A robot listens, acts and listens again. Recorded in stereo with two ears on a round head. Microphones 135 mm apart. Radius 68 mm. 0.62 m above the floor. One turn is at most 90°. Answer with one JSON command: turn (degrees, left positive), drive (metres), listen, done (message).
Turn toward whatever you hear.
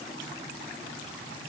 {"listen": true}
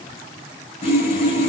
{"turn": 40}
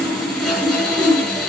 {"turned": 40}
{"done": "Found it: sawing, straight ahead."}